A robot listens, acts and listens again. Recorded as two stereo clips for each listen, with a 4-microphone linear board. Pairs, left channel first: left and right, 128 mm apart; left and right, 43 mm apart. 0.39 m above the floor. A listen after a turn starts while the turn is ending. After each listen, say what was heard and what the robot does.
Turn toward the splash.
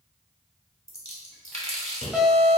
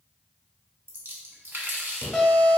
The splash: about 55° right or 125° right. Turn 55° right.
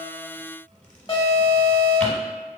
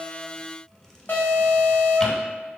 Keep listening.
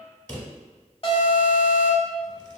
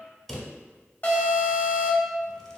I heard a splash, but can't make it out now. It was about straight ahead or 70° right.